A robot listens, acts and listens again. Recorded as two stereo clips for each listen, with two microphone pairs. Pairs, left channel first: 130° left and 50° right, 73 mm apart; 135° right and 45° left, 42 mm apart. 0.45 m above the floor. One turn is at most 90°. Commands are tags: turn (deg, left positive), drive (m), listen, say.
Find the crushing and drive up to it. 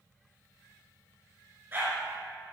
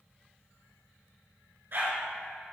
<listen/>
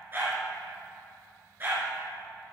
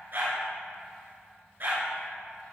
<listen/>
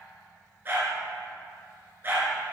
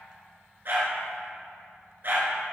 <say>I can't make out crushing, only a dog barking.</say>